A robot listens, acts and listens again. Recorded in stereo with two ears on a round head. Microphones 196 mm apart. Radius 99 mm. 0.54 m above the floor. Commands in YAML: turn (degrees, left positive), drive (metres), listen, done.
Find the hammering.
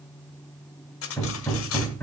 turn: 30
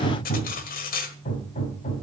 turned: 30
turn: 140
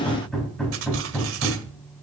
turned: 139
done: "Found it: hammering, straight ahead, 2 to 4 m away."